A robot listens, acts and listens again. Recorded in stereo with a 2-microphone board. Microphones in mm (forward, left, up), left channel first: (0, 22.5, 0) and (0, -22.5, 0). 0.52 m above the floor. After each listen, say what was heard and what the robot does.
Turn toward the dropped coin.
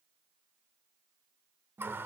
Keep listening.
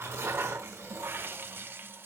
Keep listening.
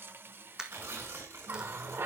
The dropped coin: about 15° right or 165° right. Turn 15° right.
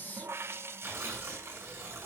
Keep listening.
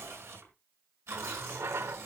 I heard a dropped coin, but can't make it out now. It was about straight ahead or 150° right.